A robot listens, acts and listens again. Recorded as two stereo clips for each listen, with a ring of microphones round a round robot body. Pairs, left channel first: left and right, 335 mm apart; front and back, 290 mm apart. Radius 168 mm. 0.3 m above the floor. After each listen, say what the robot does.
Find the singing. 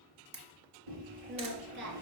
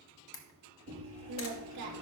Turn 150° right.
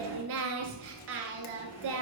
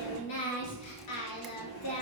Turn 35° right.
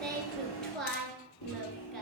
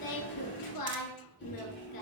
Found it: singing, straight ahead, 1 to 2 m away.